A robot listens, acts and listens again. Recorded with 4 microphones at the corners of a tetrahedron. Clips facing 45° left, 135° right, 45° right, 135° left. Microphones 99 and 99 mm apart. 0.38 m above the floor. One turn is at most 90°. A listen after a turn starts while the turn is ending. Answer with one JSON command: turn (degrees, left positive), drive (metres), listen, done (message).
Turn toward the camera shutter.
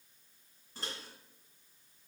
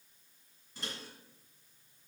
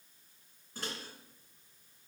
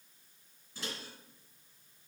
{"listen": true}
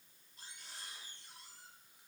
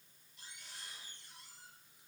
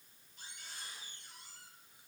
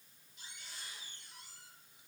{"listen": true}
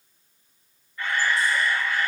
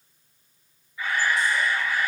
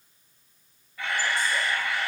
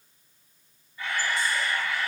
{"turn": -55}
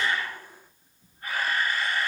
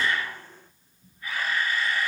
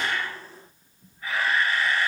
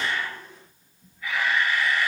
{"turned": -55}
{"done": "Found it: a camera shutter, straight ahead."}